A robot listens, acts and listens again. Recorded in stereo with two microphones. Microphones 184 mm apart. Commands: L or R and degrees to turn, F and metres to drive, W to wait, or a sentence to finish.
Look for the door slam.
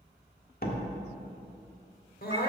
L55
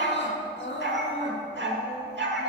W
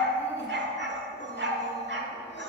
I heard a door slam, but can't make it out now. It was about straight ahead or 70° left.